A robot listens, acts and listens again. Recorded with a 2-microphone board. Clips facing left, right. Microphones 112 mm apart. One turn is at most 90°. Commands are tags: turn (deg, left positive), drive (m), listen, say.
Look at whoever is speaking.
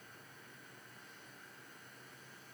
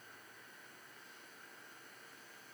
<listen/>
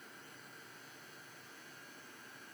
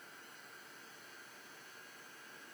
<listen/>
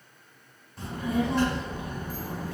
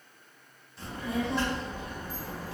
<turn deg="50"/>
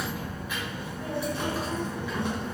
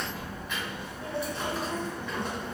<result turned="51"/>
<say>Found it: a child speaking, straight ahead.</say>